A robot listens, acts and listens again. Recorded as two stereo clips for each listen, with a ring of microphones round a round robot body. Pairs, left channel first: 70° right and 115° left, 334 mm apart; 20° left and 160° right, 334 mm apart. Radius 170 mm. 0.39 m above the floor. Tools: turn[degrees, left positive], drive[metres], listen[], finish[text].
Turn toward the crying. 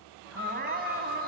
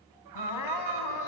Thought: The crying: 50° left.
Action: turn[50]
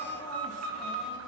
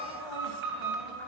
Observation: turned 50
Action: listen[]
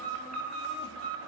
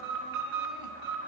Action: listen[]
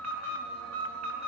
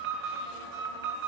Action: finish[Facing where the crying came from. I can't hear it now.]